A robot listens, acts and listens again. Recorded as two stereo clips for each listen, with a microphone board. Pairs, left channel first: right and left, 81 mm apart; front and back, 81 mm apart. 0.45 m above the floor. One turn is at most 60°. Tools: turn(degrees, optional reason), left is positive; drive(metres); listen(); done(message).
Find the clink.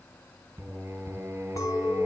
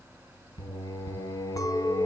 turn(degrees=-45, reason="The clink: 45° right.")
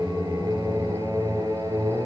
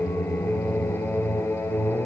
listen()
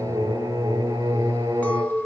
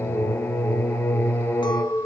turn(degrees=-20, reason="The clink is now 20° right.")
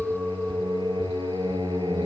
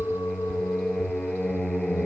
done("Found it: a clink, straight ahead.")